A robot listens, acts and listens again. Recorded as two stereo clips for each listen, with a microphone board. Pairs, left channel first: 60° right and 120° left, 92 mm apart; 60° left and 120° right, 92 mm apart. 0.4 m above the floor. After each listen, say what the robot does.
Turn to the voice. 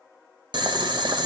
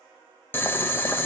Keep listening.
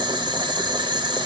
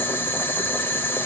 Keep listening.
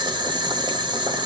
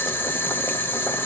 I can't make out anyone speaking, only boiling.